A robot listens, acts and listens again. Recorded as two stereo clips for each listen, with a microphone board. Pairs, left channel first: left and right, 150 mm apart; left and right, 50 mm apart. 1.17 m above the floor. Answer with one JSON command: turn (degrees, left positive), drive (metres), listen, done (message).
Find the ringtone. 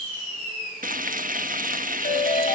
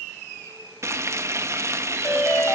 {"turn": 90}
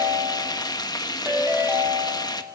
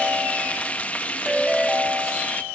{"turn": -15}
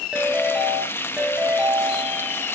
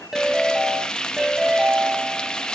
{"done": "Found it: a ringtone, straight ahead."}